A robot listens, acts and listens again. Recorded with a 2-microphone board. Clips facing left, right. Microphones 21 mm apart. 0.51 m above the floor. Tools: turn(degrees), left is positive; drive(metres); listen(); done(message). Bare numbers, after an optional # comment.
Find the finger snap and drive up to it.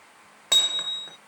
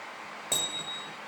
listen()
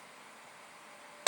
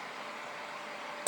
listen()
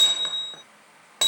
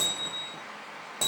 done("I can't make out a finger snap, only hammering.")